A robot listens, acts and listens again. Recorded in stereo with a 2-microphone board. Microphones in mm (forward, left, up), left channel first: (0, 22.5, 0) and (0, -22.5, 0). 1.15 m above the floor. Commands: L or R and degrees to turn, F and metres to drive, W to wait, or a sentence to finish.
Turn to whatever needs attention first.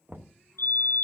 L70
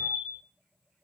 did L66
L40
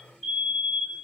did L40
Facing the fire alarm.